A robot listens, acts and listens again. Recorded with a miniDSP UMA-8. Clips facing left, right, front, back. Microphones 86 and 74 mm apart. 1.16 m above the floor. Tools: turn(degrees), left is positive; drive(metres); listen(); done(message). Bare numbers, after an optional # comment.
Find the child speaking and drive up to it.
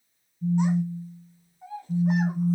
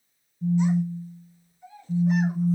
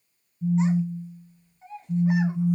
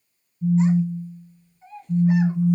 # The child speaking: 75° left.
turn(75)
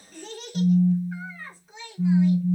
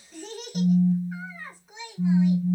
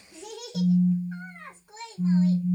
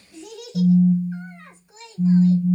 drive(1.0)
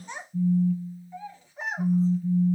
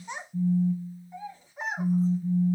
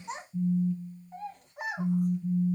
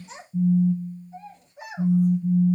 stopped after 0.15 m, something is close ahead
# The child speaking is now 10° right.
turn(-10)
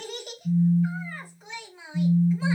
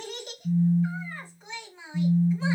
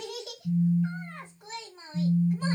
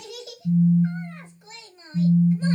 done("Something is in my way. I am facing the child speaking but have not reached it.")